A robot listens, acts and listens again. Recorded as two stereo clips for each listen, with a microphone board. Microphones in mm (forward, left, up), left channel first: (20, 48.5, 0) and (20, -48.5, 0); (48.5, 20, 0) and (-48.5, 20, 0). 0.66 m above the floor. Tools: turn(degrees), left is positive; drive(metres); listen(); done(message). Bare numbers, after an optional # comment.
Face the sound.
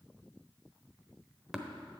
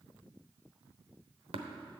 # The tapping: 175° right.
turn(-175)
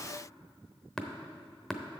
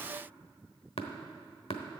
done("Found it: tapping, straight ahead.")